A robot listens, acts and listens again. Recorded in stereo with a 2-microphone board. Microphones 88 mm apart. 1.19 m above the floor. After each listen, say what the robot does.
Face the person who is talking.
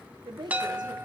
Turn 60° right.
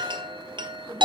Keep listening.
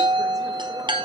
Keep listening.
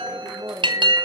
Turn 45° right.
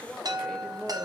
Facing the woman speaking.